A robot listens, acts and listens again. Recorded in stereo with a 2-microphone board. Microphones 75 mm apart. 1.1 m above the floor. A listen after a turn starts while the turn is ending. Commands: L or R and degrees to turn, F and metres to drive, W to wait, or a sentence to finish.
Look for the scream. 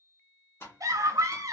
R50
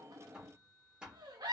R75
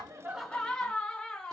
L15
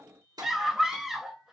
Facing the scream.